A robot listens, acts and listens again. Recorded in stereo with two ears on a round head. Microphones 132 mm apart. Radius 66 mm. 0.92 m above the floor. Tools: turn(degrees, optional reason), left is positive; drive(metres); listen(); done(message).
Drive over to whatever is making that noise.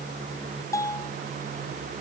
turn(degrees=20, reason="The bell: about 20° left or 160° left.")
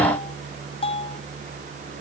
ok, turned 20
turn(degrees=140, reason="So it is at 140° left.")
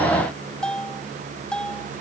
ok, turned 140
drive(metres=1.0)
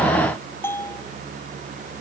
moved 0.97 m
turn(degrees=15, reason="The bell is now 15° left.")
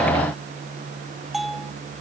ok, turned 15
drive(metres=1.0)
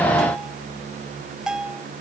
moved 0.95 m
drive(metres=1.0)
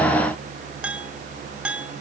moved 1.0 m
turn(degrees=-10, reason="The bell is now 10° right.")
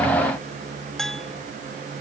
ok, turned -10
drive(metres=1.0)
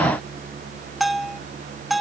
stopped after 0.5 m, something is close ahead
done("Arrived at the bell, straight ahead.")